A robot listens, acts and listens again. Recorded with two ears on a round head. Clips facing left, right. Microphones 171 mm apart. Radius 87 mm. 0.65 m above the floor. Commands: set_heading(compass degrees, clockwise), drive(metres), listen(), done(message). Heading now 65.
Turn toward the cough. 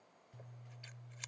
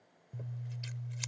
listen()
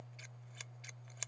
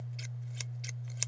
listen()
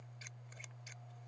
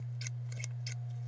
done("I can't make out a cough, only scissors.")